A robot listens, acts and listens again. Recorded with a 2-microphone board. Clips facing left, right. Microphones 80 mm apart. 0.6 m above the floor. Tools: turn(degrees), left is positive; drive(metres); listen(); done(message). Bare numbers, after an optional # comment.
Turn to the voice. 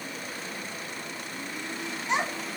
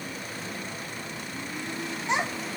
# The child speaking: about 25° right or 155° right.
turn(-25)
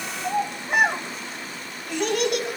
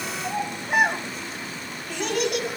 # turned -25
done("Found it: a child speaking, straight ahead.")